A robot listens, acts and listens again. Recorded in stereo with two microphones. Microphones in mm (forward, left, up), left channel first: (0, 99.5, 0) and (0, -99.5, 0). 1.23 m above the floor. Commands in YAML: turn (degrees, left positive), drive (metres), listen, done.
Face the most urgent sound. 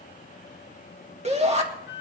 turn: -35
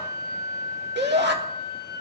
turn: -110
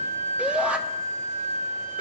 done: "Found it: a shout, straight ahead, 2 to 4 m away."